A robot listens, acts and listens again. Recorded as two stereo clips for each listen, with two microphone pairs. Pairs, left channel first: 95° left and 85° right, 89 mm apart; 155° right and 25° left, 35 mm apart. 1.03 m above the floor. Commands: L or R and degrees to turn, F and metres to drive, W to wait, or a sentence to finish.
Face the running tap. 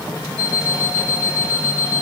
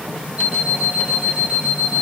W
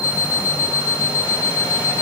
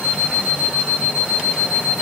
W
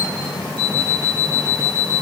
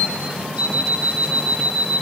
I can't make out a running tap to turn to.